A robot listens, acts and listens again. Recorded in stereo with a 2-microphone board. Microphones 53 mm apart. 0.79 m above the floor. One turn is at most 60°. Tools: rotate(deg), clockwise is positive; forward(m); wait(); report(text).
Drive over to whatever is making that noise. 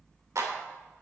rotate(60)
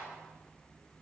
wait()
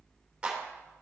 rotate(20)
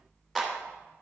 forward(1.0)
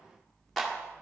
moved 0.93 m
forward(1.0)
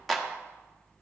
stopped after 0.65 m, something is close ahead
report("I am next to the clap.")